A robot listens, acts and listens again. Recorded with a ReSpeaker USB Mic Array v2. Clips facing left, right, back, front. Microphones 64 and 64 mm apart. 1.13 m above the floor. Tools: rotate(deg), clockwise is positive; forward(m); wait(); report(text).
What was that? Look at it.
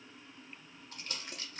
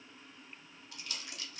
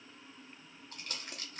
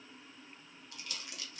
rotate(-135)
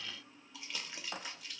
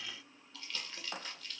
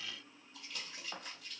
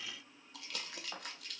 rotate(-15)
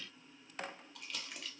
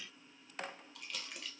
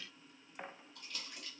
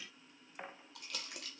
report("Facing the crumpling, under 1 m away.")